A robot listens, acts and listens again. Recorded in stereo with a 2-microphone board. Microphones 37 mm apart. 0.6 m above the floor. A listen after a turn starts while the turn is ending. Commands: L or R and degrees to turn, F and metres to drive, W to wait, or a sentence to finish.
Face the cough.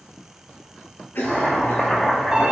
L65
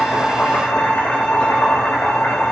W
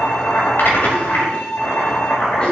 L30
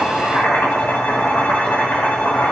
W
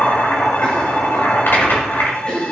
L25
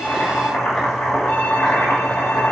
W
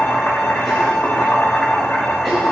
W
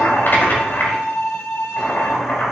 I heard a cough from this way, but can't make it out now.